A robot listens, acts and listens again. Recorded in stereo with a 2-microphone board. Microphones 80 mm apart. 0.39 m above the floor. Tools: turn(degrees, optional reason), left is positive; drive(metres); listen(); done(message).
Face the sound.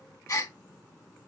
turn(degrees=45, reason="The gasp: about 45° left or 135° left.")
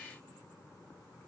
listen()
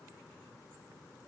done("I heard a gasp, but can't make it out now. It was about straight ahead or 90° left.")